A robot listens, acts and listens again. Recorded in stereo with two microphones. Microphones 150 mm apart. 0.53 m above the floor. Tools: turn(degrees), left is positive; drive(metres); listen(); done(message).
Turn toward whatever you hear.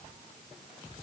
listen()
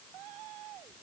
listen()
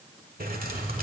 turn(degrees=-90)
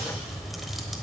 done("Facing the keys jangling, 1 to 2 m away.")